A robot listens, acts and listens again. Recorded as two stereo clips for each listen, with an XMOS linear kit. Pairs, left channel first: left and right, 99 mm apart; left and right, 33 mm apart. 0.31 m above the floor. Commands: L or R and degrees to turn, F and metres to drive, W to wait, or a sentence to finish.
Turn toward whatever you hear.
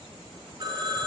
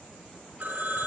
R45
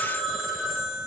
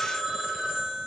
Found it: a phone ringing, straight ahead.